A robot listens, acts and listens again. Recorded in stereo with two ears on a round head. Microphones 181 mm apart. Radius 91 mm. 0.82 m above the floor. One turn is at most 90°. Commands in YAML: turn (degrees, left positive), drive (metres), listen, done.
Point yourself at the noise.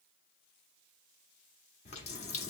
turn: 35
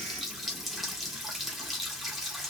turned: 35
done: "Facing the running tap, under 1 m away."